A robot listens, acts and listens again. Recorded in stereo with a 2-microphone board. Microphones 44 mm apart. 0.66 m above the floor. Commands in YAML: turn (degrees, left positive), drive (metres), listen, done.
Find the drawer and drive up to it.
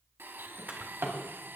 turn: -75
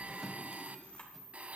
listen: true
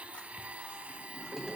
drive: 1.0
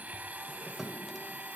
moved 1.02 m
drive: 1.0
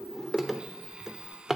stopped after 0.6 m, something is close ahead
turn: -10
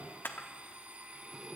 listen: true
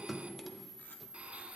done: "I am next to the drawer."